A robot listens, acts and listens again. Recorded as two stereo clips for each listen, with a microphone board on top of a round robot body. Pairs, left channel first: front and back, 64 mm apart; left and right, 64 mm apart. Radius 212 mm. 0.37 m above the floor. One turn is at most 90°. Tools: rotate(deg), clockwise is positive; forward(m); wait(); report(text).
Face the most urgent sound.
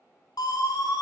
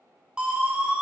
rotate(15)
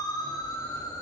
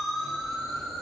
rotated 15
report("Facing the siren.")